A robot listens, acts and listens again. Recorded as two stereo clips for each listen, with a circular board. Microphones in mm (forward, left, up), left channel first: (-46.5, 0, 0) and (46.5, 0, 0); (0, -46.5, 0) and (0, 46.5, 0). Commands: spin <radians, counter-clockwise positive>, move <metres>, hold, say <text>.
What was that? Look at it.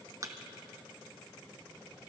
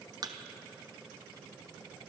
spin 0.87
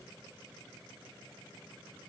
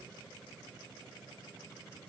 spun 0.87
say I heard a thud from this way, but can't make it out now.